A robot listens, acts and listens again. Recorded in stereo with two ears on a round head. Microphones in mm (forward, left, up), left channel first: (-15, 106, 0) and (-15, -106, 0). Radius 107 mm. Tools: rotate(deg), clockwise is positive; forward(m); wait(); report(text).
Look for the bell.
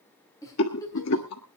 wait()
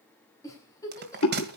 rotate(45)
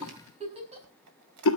wait()
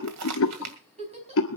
rotate(90)
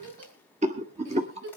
wait()
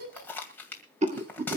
rotate(-10)
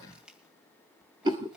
wait()
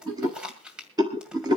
report("Facing the bell, 2 to 4 m away.")